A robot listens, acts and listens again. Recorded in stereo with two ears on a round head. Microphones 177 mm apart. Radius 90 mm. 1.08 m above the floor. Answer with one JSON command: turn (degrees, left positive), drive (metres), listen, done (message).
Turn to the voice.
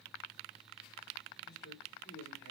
{"turn": 50}
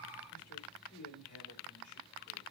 {"turn": 80}
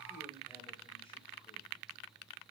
{"turn": 25}
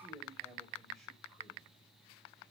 {"done": "Facing the man speaking, 2 to 4 m away."}